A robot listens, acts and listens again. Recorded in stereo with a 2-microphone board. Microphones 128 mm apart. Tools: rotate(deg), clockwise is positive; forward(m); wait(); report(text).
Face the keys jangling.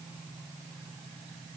wait()
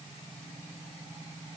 wait()
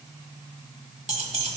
rotate(60)
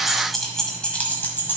rotate(-15)
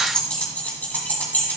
rotate(-15)
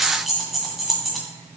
report("Facing the keys jangling.")